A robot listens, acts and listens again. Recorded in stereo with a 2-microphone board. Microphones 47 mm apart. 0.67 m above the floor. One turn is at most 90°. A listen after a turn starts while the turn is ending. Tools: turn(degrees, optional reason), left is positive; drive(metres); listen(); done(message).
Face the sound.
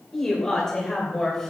turn(degrees=30)
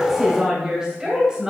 turn(degrees=-15, reason="So it is at 15° right.")
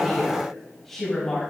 done("Found it: a woman speaking, straight ahead, 2 to 4 m away.")